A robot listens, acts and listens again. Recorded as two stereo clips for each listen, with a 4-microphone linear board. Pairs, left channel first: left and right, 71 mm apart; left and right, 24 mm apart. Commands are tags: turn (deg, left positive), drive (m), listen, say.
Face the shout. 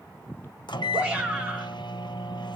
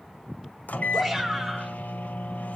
<turn deg="-15"/>
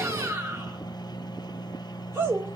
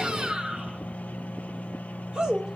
<turn deg="-145"/>
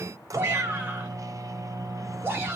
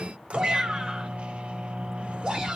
<turn deg="-30"/>
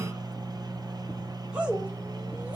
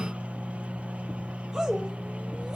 <turn deg="-15"/>
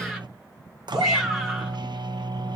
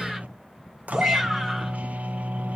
<say>Found it: a shout, straight ahead.</say>